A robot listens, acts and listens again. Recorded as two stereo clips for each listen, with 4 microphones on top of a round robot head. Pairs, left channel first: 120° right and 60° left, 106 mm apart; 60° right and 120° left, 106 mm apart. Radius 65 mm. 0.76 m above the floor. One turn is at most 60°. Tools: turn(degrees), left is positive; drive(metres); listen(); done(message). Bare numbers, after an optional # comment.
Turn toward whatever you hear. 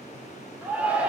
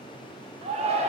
# The shout: 140° left.
turn(60)
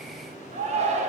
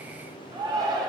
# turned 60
# The shout is now 70° left.
turn(60)
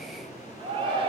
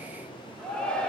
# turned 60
# The shout is now 20° left.
turn(20)
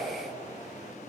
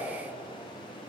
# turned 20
done("Found it: a shout, straight ahead, 2 to 4 m away.")